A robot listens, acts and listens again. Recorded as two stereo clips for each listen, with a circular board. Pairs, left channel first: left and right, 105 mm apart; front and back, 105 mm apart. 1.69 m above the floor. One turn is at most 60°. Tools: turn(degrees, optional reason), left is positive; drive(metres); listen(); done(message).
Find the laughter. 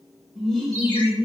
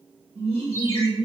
turn(degrees=60, reason="The laughter: 170° left.")
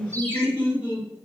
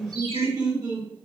turn(degrees=60, reason="The laughter is now 120° left.")
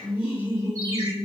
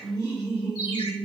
turn(degrees=50, reason="The laughter is now 50° left.")
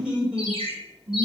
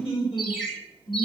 turn(degrees=-10, reason="The laughter is now 10° right.")
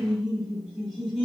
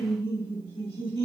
done("Found it: laughter, straight ahead.")